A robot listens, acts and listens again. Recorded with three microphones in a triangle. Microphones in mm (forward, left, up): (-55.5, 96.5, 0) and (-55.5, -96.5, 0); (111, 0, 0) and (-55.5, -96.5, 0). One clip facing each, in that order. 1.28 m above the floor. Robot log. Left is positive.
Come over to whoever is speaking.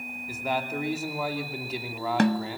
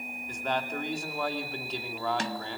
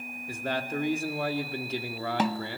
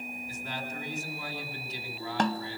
cmd fwd 1.0
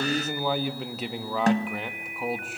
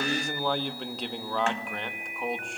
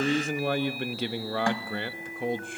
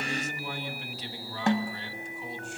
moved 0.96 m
cmd fwd 1.0
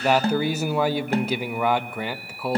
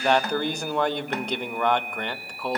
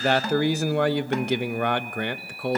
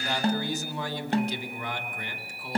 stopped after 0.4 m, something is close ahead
end: Arrived at the man speaking, straight ahead.